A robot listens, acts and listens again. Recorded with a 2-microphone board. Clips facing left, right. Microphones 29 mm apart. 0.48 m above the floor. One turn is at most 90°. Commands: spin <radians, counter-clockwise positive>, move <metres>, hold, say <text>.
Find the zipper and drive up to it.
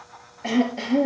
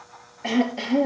hold
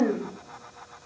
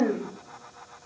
hold
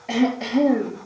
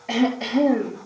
say I can't make out a zipper to turn to.